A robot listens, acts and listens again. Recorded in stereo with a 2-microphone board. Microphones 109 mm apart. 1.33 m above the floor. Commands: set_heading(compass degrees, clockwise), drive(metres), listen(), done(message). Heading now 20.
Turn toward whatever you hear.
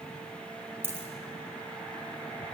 set_heading(40)
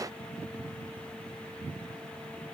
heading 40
listen()
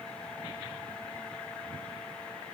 done("I heard a dropped coin, but can't make it out now. It was about straight ahead or 140° right.")